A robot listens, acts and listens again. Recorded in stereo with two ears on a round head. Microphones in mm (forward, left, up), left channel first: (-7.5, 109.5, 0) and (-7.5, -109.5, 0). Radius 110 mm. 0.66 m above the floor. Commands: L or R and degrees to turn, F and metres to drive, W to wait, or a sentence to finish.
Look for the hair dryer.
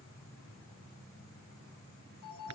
W
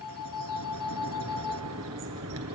W
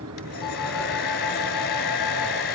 L50
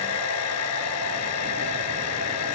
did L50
L80
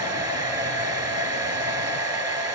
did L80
R20
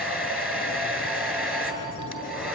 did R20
Facing the hair dryer, 2 to 4 m away.